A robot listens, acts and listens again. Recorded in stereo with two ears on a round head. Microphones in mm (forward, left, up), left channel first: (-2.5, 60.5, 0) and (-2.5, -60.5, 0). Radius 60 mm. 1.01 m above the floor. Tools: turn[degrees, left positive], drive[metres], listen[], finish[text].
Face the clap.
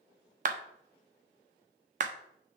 Thought: The clap: about 60° right or 120° right.
Action: turn[-60]
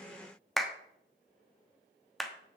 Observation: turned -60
Action: finish[Facing the clap, 1 to 2 m away.]